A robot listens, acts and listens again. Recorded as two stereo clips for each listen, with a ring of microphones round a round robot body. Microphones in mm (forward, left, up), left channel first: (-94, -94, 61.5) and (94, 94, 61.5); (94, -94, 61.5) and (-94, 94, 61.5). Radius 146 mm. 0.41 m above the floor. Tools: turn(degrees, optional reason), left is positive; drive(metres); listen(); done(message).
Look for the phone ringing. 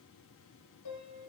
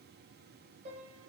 listen()
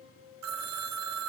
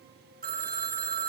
turn(degrees=75, reason="The phone ringing: 75° left.")
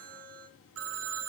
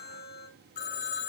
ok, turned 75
turn(degrees=10, reason="The phone ringing is now 10° left.")
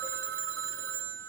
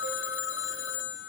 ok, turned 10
done("Found it: a phone ringing, straight ahead, 2 to 4 m away.")